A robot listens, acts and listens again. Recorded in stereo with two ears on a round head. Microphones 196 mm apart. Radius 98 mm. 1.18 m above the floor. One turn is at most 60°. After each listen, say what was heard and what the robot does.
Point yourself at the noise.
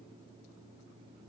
Keep listening.
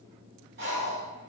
The breathing: about 50° right or 130° right. Turn 50° right.
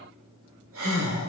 So it is at 75° right. Turn 60° right.
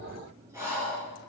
The breathing is now 15° right. Turn 15° right.
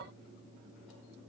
Keep listening.
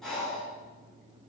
Found it: breathing, straight ahead, 2 to 4 m away.